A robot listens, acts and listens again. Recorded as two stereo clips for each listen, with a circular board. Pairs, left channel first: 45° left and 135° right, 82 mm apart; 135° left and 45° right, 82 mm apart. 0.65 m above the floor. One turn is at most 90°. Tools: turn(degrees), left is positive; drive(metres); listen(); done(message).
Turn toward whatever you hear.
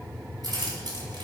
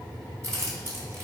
turn(degrees=-90)
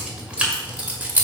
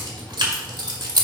turn(degrees=-70)
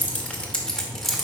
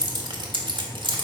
turn(degrees=-45)
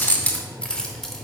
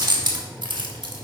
turn(degrees=-35)
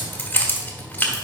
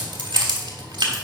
turn(degrees=-25)
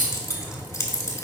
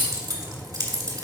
done("Facing the keys jangling, 1 to 2 m away.")